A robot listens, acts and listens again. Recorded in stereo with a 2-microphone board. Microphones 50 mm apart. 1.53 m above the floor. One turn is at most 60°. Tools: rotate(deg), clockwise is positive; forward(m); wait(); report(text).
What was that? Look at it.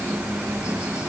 wait()
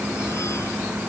wait()
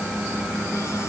report("I can't make out anything.")